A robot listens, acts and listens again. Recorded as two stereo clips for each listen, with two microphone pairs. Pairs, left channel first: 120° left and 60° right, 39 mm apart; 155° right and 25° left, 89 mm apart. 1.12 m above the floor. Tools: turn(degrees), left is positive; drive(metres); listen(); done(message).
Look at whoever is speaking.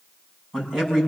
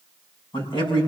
turn(degrees=-145)
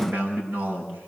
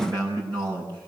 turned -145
turn(degrees=-10)
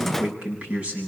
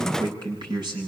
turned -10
done("Found it: a man speaking, straight ahead, over 4 m away.")